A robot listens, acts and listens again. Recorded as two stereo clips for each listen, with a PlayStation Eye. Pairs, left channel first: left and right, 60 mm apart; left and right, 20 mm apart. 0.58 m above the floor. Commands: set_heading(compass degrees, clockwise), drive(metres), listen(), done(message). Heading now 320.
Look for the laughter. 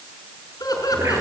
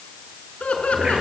set_heading(230)
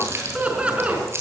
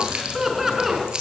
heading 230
set_heading(250)
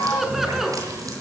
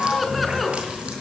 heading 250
done("Found it: laughter, straight ahead.")